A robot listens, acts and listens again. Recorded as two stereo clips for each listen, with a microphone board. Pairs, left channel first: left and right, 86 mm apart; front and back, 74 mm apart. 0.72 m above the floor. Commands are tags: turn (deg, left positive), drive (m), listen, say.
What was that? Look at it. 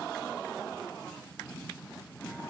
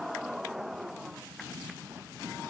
<listen/>
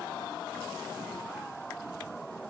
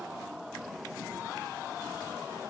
<listen/>
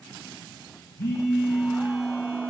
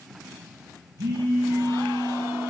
<turn deg="150"/>
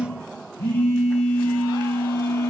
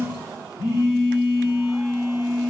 <turn deg="25"/>
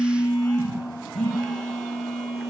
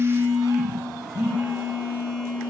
<say>Found it: a phone buzzing, straight ahead.</say>